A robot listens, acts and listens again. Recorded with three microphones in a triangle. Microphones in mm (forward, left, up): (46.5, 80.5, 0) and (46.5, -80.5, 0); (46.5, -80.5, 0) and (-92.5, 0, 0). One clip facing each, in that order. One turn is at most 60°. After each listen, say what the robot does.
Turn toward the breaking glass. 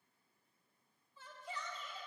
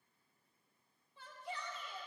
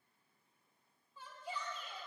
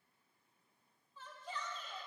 Keep listening.
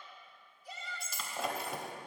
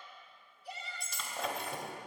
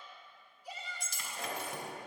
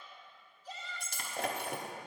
Turn 60° left.
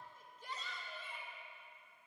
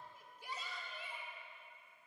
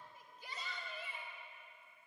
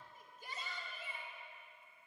Turn 60° left.
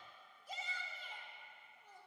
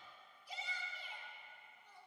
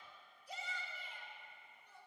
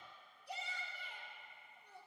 Turn 60° left.
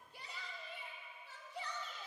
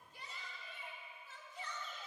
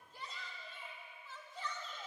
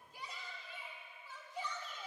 Facing where the breaking glass came from. I can't hear it now.